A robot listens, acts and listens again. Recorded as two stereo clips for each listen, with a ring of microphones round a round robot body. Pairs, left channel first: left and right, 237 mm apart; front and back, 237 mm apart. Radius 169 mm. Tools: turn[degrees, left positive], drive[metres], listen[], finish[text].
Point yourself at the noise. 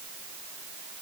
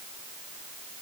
Action: listen[]
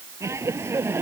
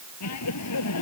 Thought: The laughter: 10° right.
Action: turn[-10]
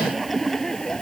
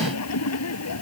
Action: finish[Found it: laughter, straight ahead.]